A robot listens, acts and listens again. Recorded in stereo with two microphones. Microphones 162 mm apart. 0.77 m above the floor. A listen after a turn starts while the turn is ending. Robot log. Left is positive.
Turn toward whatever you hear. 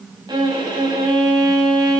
note: The violin: about 25° right or 155° right.
cmd yaw -25
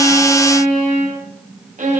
note: So it is at 130° right.
cmd yaw -130
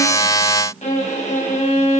note: The violin is now 45° left.
cmd yaw +45
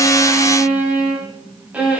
note: The violin is now 10° right.
cmd yaw -10
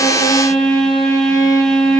end: Facing the violin, 2 to 4 m away.